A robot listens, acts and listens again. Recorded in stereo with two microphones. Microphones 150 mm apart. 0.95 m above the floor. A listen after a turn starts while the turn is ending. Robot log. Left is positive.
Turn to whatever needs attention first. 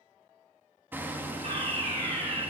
note: The fire alarm: about 40° right or 140° right.
cmd yaw -40
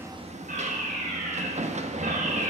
note: So it is at 95° right.
cmd yaw -95
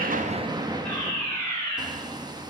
end: Found it: a fire alarm, straight ahead, over 4 m away.